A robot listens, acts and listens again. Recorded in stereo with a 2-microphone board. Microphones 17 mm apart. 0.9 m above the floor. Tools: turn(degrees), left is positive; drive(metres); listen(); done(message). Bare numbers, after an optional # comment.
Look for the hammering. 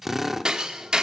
# The hammering: about 50° right or 130° right.
turn(-50)
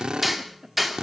done("Found it: hammering, straight ahead, 1 to 2 m away.")